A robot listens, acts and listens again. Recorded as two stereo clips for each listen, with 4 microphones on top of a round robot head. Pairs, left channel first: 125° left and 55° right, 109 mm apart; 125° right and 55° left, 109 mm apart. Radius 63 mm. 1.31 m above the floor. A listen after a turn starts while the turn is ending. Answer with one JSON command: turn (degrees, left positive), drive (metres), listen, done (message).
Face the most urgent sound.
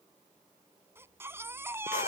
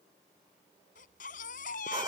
{"turn": -125}
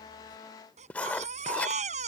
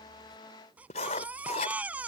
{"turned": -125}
{"turn": -25}
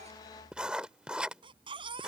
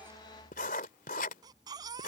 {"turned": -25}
{"done": "Facing the baby crying."}